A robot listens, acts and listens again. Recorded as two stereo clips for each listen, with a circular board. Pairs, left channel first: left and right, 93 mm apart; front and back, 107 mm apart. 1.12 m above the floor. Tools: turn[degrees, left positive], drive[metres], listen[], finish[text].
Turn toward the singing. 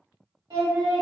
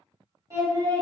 Thought: The singing: 130° right.
Action: turn[-130]
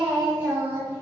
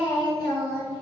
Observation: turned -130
Thought: The singing is now 40° right.
Action: turn[-40]
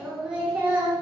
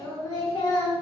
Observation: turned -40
Thought: The singing is now 30° right.
Action: turn[-30]
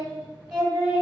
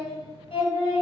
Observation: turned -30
Thought: The singing is now 15° right.
Action: turn[-15]
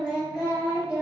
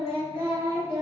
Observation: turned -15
Thought: The singing is now 10° right.
Action: turn[-10]
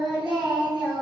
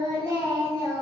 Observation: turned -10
Action: finish[Facing the singing, 1 to 2 m away.]